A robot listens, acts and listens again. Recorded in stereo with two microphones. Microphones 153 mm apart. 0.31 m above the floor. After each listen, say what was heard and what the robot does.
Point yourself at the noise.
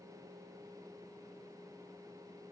Keep listening.
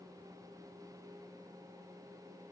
Keep listening.
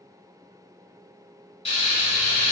The frying: about 40° left or 140° left. Turn 40° left.
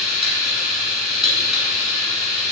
Found it: frying, straight ahead, 1 to 2 m away.